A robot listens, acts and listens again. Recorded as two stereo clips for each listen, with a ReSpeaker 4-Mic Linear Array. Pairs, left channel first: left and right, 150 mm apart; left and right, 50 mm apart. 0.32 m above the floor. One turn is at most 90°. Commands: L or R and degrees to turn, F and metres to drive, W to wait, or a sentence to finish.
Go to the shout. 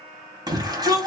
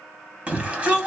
R25
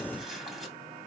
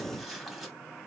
W
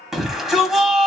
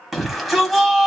F1.0
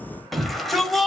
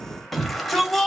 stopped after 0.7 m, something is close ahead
Arrived at the shout, straight ahead.